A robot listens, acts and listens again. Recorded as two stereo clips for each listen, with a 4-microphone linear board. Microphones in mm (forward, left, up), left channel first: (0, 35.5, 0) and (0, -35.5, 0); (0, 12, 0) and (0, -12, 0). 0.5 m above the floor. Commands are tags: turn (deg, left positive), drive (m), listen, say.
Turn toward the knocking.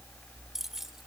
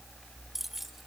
<listen/>
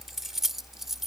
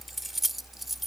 <listen/>
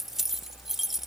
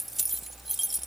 <say>I can't make out knocking to turn to.</say>